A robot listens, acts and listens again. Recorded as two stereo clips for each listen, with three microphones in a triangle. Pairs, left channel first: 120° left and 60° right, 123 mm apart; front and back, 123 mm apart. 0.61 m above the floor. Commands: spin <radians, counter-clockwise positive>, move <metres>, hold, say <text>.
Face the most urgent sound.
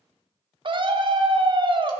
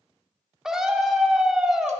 spin -1.66
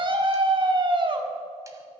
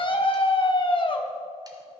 spin -0.52
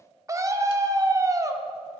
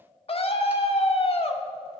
say Found it: a scream, straight ahead.